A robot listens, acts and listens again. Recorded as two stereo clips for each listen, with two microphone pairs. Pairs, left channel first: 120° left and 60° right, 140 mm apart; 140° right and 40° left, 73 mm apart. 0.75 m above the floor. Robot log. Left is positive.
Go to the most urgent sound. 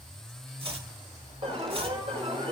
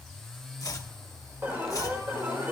note: The alarm: 15° right.
cmd yaw -15
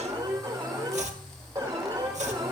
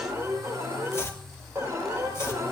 cmd fwd 1.0
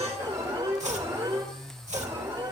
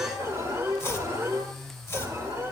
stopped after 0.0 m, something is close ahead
end: Something is in my way. I am facing the alarm but have not reached it.